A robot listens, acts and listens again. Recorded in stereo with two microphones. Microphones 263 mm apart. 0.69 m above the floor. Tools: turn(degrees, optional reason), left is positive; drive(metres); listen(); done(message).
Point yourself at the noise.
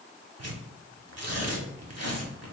turn(degrees=-75, reason="The tearing paper: about 75° right or 105° right.")
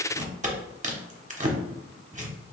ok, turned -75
turn(degrees=-30, reason="So it is at 30° right.")
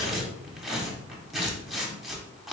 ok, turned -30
done("Found it: tearing paper, straight ahead.")